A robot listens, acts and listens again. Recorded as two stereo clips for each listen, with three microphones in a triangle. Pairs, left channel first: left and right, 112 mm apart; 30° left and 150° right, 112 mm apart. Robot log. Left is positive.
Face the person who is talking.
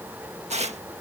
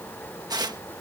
cmd idle
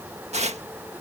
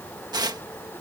cmd idle
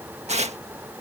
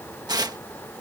end: I can't make out anyone speaking, only tearing paper.